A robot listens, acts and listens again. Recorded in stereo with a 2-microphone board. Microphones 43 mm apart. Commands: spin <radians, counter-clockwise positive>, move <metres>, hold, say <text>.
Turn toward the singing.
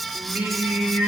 spin -0.96
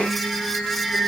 say Facing the singing.